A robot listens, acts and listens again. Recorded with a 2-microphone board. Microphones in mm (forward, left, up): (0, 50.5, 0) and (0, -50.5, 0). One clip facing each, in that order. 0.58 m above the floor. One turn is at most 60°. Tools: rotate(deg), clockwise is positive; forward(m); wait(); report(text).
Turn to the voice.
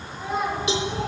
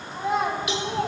rotate(60)
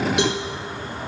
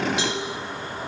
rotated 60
rotate(30)
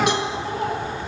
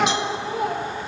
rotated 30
rotate(15)
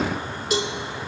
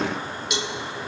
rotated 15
wait()
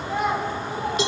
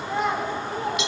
report("Facing the child speaking.")